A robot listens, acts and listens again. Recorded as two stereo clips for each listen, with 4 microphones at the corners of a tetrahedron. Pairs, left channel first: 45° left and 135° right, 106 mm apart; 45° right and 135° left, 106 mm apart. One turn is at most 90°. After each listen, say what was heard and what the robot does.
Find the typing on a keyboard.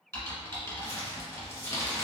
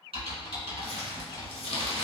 The typing on a keyboard: 110° left. Turn 90° left.
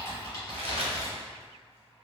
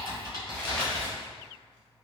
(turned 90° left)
Found it: typing on a keyboard, straight ahead, 1 to 2 m away.